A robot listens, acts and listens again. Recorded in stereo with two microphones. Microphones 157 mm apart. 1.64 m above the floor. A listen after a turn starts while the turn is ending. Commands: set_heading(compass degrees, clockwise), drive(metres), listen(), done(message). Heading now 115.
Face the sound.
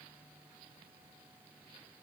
listen()
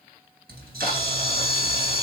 set_heading(185)
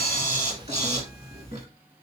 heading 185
set_heading(225)
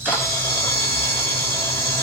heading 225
set_heading(210)
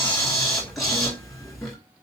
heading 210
done("Facing the camera shutter, 1 to 2 m away.")